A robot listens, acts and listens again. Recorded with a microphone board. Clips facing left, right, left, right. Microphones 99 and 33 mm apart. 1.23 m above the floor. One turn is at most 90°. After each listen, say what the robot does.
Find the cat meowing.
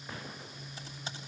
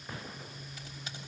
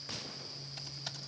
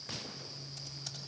Keep listening.
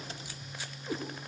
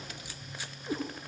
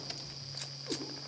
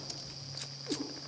Turn 30° right.
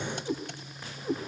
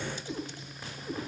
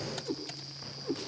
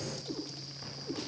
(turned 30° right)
Turn 25° left.
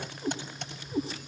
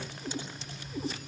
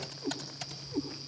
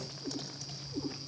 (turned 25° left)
Turn 30° left.
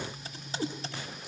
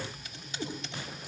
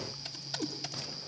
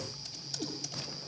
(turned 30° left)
Found it: a cat meowing, straight ahead.